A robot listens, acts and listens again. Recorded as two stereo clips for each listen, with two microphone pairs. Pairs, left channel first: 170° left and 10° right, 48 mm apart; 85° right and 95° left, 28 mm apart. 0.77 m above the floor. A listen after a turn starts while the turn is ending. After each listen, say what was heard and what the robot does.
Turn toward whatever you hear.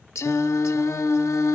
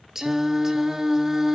The singing: 170° left. Turn 170° left.
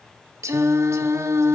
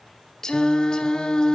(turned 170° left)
The singing is now 20° right. Turn 20° right.
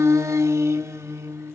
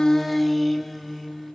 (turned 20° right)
Found it: singing, straight ahead, under 1 m away.